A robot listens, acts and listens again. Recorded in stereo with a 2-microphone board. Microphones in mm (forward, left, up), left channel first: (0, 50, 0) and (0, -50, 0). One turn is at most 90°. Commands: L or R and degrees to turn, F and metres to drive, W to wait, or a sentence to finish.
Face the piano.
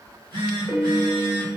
R30
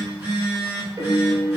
R90
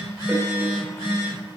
R30
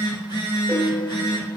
L25
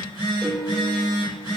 Found it: a piano, straight ahead, under 1 m away.